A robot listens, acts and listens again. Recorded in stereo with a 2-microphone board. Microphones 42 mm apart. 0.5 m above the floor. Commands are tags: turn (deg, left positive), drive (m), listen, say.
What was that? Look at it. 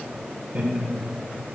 <turn deg="-40"/>
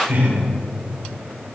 <turn deg="-90"/>
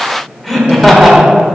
<say>Facing the laughter.</say>